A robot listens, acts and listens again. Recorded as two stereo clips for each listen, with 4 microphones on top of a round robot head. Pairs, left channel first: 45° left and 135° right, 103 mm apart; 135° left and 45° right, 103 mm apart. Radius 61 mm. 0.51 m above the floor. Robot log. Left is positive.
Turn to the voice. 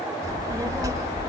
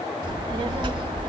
note: The child speaking: 80° right.
cmd yaw -80
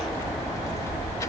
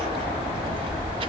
note: The child speaking is now 15° right.
cmd yaw -15
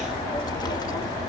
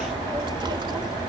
end: Found it: a child speaking, straight ahead, 1 to 2 m away.